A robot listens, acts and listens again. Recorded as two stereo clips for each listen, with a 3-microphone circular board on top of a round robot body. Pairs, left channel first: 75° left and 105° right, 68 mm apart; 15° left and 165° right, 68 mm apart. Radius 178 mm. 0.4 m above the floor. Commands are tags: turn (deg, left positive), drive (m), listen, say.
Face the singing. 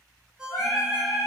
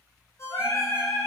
<turn deg="55"/>
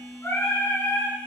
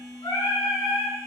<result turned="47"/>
<turn deg="15"/>
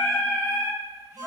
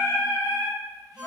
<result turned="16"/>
<turn deg="20"/>
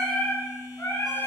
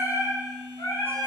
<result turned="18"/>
<turn deg="20"/>
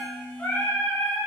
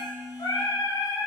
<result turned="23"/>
<turn deg="15"/>
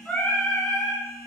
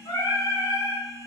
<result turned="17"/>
<say>Found it: singing, straight ahead, 1 to 2 m away.</say>